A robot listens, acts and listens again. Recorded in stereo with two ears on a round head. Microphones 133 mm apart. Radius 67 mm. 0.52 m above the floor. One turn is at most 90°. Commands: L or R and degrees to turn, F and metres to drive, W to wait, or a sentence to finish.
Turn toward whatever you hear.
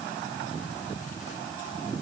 W
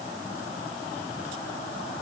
W
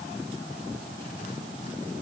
I can't make out anything.